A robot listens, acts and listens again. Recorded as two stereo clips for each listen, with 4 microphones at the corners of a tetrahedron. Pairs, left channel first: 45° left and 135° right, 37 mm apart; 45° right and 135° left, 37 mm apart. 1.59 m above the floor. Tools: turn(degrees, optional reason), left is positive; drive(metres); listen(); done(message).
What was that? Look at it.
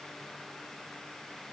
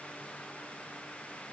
listen()
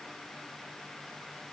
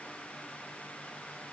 listen()
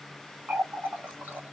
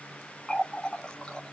turn(degrees=-115, reason="The running tap: 115° right.")
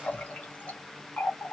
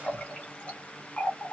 done("Facing the running tap.")